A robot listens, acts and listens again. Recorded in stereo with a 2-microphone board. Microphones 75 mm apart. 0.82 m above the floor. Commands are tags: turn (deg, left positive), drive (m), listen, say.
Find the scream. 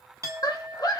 <turn deg="55"/>
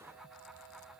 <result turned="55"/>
<listen/>
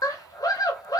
<turn deg="60"/>
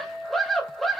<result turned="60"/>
<say>Facing the scream.</say>